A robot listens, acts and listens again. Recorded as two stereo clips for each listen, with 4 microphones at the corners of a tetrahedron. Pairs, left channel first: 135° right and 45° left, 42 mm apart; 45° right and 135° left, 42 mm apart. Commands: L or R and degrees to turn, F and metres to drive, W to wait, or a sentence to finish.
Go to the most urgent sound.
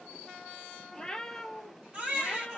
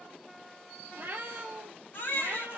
R20
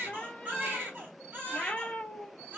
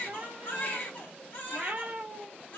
F1.0
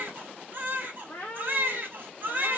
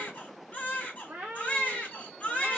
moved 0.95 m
F1.0
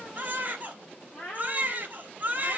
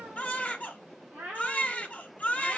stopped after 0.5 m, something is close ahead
I am next to the baby crying.